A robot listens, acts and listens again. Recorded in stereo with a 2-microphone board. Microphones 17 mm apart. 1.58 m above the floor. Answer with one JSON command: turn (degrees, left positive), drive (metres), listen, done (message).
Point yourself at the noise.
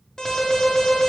{"turn": 35}
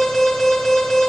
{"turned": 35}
{"done": "Facing the alarm, under 1 m away."}